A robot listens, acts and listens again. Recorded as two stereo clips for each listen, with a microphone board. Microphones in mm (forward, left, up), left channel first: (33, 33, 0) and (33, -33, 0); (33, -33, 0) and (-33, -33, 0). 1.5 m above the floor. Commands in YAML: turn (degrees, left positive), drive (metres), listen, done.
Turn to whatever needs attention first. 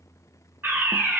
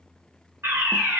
turn: -135
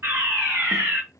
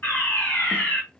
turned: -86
turn: -50
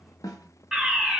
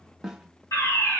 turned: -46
done: "Facing the fire alarm, 1 to 2 m away."